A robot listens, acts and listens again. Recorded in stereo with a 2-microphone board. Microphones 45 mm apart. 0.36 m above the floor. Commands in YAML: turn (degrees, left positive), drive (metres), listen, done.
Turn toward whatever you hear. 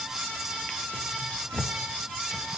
turn: 25
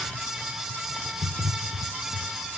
turn: 130
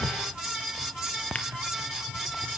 turn: 30
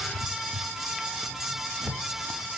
done: "Facing the drawer, 2 to 4 m away."